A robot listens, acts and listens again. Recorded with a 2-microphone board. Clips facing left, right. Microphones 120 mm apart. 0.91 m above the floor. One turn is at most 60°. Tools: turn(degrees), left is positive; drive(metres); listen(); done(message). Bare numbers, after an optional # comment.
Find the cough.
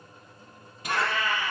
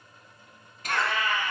# The cough: about 20° left or 160° left.
turn(20)
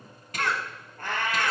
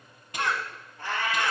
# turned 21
done("Facing the cough, 1 to 2 m away.")